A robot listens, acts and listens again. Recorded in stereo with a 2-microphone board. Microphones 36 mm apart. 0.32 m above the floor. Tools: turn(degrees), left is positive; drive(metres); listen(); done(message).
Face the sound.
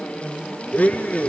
turn(degrees=45)
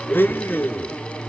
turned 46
turn(degrees=85)
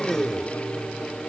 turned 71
turn(degrees=15)
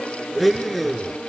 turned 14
done("Facing the blender.")